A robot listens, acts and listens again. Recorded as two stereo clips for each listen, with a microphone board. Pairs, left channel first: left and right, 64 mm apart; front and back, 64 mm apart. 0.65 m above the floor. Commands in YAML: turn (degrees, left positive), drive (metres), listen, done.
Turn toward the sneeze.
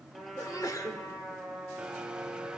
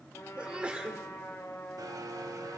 turn: 110
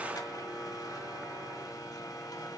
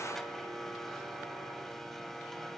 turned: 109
done: "I heard a sneeze from this way, but can't make it out now."